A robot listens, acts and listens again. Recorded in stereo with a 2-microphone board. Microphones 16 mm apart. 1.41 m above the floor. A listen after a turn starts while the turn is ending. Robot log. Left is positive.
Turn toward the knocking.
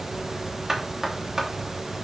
note: The knocking: about 35° right or 145° right.
cmd yaw -35
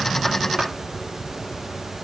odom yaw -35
cmd idle
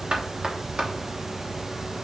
note: So it is at 110° right.
cmd yaw -110
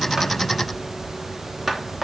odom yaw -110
note: The knocking is now 10° right.
cmd yaw -10
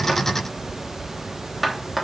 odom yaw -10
end: Found it: knocking, straight ahead.